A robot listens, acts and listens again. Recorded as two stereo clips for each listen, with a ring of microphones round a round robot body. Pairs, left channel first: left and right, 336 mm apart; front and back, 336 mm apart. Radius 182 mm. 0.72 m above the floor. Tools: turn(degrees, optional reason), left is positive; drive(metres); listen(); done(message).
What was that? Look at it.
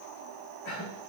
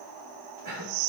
turn(degrees=135, reason="The cough: 135° left.")
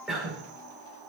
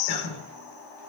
done("Found it: a cough, straight ahead, 2 to 4 m away.")